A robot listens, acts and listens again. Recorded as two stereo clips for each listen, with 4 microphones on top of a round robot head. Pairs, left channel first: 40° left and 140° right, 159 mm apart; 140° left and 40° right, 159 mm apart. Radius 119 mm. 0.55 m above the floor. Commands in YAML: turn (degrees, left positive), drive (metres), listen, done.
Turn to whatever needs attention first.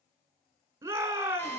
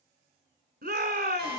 turn: -65
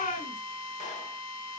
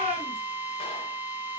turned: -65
turn: 10
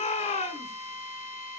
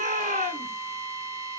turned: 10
done: "Facing the shout."